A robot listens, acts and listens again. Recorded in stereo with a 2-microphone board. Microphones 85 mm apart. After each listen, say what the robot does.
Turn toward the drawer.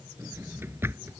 Turn 30° right.
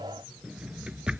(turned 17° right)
Turn 15° right.
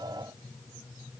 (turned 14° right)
Keep listening.
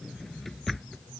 Facing the drawer.